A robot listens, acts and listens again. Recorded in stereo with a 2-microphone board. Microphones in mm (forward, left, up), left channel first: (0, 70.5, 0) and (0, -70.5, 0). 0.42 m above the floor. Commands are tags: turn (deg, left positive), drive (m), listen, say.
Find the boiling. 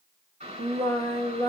<turn deg="-50"/>
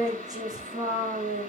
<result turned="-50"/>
<turn deg="-75"/>
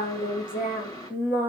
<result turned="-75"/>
<turn deg="25"/>
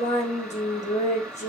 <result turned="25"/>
<say>Facing the boiling.</say>